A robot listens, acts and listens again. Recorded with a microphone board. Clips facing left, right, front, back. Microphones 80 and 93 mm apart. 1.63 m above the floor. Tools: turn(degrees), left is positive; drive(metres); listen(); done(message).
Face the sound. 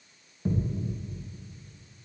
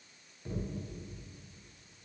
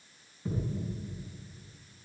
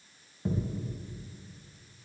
turn(degrees=150)
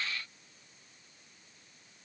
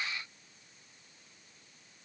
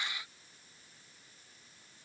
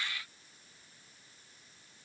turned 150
done("I heard a thud from this way, but can't make it out now.")